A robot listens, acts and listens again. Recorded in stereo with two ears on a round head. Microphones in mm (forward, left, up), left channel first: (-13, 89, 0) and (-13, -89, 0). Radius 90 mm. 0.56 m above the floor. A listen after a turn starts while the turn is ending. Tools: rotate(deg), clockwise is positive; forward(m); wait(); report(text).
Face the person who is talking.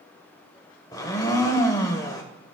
wait()
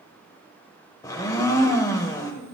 rotate(60)
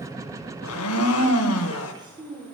rotate(25)
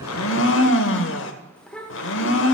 report("Found it: a child speaking, straight ahead, 1 to 2 m away.")